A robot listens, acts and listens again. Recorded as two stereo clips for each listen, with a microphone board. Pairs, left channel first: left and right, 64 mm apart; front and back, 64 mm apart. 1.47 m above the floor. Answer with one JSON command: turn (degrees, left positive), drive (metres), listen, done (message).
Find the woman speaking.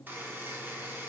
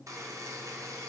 {"listen": true}
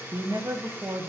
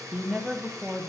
{"turn": -110}
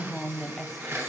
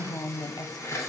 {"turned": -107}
{"done": "Facing the woman speaking."}